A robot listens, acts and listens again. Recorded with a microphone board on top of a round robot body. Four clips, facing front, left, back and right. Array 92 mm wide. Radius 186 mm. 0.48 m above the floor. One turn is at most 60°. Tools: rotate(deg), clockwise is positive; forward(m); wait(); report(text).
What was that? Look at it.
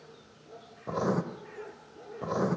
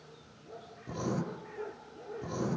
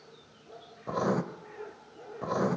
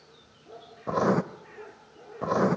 rotate(60)
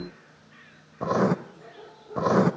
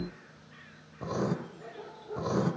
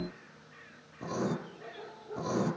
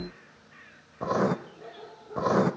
rotate(30)
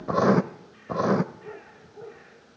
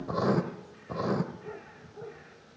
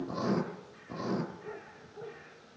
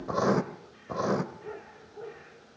rotate(10)
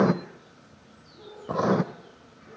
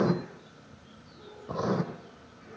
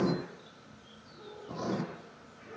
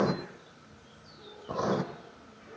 report("Facing the writing, 1 to 2 m away.")